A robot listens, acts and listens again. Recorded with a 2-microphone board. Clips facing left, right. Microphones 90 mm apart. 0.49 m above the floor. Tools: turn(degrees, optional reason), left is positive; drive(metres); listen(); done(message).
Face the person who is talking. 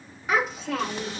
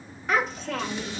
turn(degrees=30)
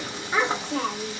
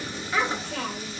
turn(degrees=145, reason="So it is at 145° left.")
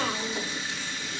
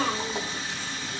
done("Found it: a child speaking, straight ahead.")